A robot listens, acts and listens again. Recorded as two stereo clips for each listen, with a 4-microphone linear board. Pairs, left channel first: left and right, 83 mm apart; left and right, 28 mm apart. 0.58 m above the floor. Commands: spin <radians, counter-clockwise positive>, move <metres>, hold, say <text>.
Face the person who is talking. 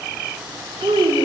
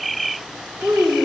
spin -1.31
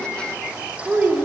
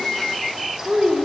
spin -0.44
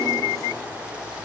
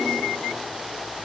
hold
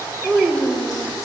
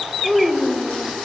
spin -0.35
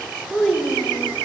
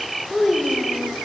say Found it: a child speaking, straight ahead.